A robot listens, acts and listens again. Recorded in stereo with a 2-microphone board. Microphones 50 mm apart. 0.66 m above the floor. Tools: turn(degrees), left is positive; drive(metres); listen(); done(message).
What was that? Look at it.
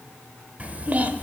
turn(degrees=-35)
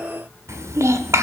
turn(degrees=-105)
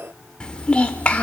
turn(degrees=25)
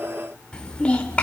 turn(degrees=25)
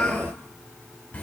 turn(degrees=25)
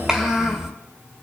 turn(degrees=-10)
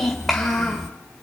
done("Facing the child speaking, 1 to 2 m away.")